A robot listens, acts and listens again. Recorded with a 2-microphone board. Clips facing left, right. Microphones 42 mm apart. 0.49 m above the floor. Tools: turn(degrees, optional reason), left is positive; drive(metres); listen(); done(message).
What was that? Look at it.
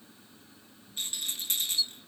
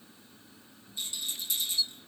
turn(degrees=60, reason="The rattle: about 60° left or 120° left.")
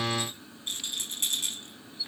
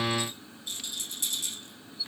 turn(degrees=55, reason="So it is at 55° left.")
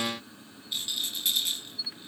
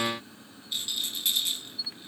done("Facing the rattle, 2 to 4 m away.")